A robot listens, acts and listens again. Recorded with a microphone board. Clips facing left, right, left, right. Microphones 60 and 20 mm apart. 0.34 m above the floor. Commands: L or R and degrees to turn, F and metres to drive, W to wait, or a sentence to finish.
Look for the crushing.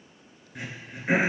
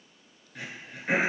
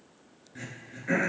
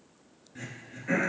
W
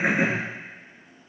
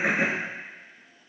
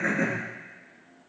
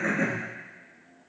W
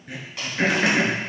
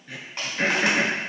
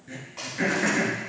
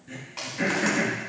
R30
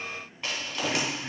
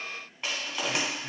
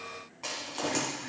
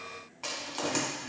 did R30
Facing the crushing.